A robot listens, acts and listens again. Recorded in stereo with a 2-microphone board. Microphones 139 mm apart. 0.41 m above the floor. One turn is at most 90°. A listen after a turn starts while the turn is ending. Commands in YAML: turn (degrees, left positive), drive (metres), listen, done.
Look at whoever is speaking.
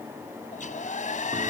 listen: true
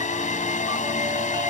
listen: true
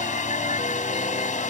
done: "I can't make out anyone speaking to turn to."